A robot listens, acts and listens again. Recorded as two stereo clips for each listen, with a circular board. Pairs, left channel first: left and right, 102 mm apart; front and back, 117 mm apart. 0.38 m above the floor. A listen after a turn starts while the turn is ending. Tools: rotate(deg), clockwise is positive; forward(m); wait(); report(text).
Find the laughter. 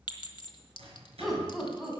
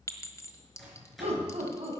rotate(175)
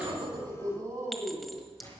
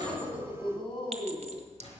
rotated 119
rotate(35)
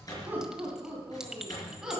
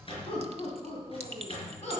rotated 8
rotate(10)
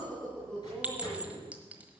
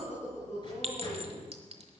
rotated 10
report("Found it: laughter, straight ahead, 2 to 4 m away.")